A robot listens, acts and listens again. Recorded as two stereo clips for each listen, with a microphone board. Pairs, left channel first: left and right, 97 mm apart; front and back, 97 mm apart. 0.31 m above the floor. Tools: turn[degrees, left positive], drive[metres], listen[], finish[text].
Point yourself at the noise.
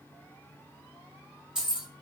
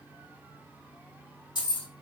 Thought: The keys jangling: 15° right.
Action: turn[-15]
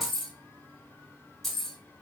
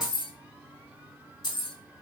Action: finish[Facing the keys jangling, under 1 m away.]